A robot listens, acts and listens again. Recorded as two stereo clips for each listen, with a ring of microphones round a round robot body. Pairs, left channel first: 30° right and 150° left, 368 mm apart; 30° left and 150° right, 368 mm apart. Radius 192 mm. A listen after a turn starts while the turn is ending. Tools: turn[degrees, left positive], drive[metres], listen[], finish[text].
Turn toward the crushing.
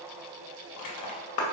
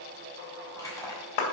Thought: The crushing: 50° right.
Action: turn[-50]
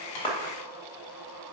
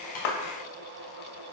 Action: listen[]
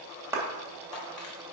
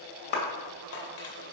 Action: listen[]
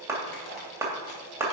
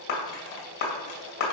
Action: finish[Facing where the crushing came from. I can't hear it now.]